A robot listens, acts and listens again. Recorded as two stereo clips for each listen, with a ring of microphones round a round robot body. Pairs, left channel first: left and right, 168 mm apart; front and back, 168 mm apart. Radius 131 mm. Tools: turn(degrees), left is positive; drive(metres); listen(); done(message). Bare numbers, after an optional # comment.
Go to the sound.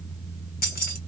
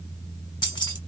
# The keys jangling: 65° left.
turn(65)
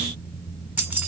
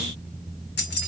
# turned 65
# The keys jangling is now 10° right.
turn(-10)
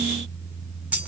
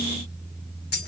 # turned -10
drive(1.0)
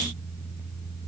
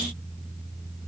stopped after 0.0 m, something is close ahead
listen()
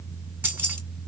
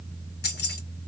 # The keys jangling is now 10° right.
turn(-10)
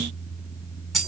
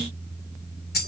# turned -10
done("Blocked. The keys jangling is further on, straight ahead.")